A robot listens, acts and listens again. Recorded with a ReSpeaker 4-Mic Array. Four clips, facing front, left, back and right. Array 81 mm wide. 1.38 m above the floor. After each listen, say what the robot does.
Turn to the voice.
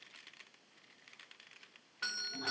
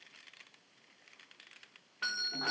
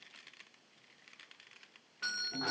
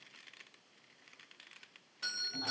Keep listening.
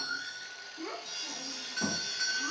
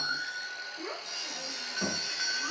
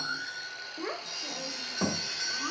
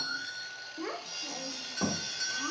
Turn 165° right.
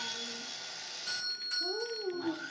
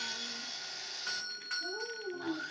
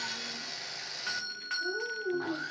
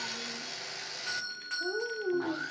Turn 60° right.
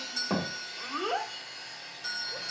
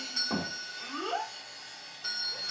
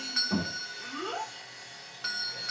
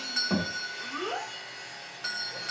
Found it: a child speaking, straight ahead, 1 to 2 m away.